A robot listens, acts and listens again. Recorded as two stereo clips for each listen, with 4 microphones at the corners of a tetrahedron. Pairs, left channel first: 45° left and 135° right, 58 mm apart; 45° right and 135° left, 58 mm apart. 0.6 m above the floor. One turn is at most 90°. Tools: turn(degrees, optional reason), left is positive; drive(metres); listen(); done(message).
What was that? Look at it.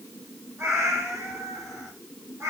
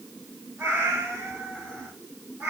turn(degrees=-90, reason="The cat meowing: 165° right.")
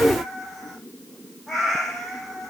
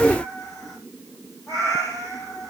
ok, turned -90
turn(degrees=-45, reason="The cat meowing is now 45° right.")
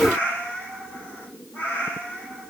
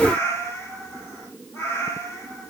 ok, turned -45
done("Facing the cat meowing, over 4 m away.")